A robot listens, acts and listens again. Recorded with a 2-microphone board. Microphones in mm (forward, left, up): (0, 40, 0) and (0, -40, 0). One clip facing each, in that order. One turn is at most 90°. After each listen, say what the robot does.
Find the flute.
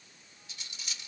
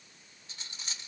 Keep listening.
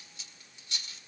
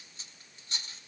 Keep listening.
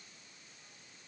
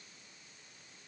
I can't make out a flute, only cutlery clinking.